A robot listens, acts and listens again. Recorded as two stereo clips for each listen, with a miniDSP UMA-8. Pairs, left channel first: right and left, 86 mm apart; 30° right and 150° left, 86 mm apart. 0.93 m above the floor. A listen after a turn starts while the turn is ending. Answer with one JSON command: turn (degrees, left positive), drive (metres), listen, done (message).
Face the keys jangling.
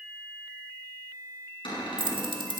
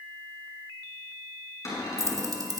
{"turn": 105}
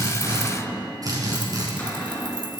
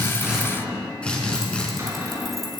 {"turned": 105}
{"listen": true}
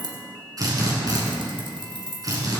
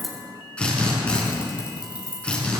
{"turn": 75}
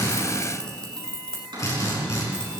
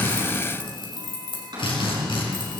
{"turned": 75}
{"turn": -10}
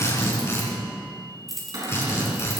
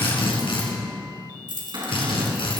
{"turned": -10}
{"done": "Facing the keys jangling, 2 to 4 m away."}